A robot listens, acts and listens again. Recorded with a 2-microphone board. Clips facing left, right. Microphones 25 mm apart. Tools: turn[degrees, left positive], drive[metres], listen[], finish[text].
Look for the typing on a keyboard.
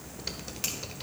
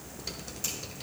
Thought: The typing on a keyboard: about 25° left or 155° left.
Action: turn[25]
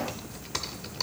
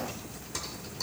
Thought: So it is at 130° left.
Action: turn[130]
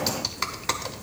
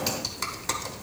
Thought: The typing on a keyboard is now 20° left.
Action: turn[20]
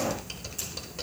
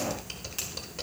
Action: finish[Found it: typing on a keyboard, straight ahead.]